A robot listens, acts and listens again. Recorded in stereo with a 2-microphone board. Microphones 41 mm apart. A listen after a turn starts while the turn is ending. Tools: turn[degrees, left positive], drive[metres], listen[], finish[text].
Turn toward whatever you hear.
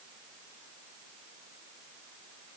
Action: listen[]
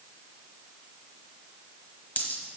Thought: The dropped coin: about 40° left or 140° left.
Action: turn[40]
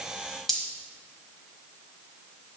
Thought: So it is at 10° left.
Action: turn[10]
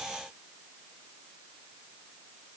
Action: finish[Facing where the dropped coin came from. I can't hear it now.]